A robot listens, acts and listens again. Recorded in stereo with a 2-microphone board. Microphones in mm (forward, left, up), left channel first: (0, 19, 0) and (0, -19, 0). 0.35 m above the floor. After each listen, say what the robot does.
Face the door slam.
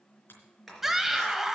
Turn 30° left.
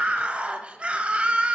Keep listening.
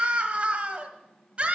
I heard a door slam, but can't make it out now. It was about 30° right or 150° left.